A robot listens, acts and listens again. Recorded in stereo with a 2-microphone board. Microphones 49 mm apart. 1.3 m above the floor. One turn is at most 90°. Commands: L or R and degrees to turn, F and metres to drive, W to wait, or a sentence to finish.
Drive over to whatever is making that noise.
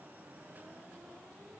W
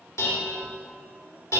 L90
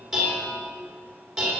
F1.0
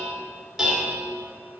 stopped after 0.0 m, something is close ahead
Blocked. The dishes clattering is further on, straight ahead.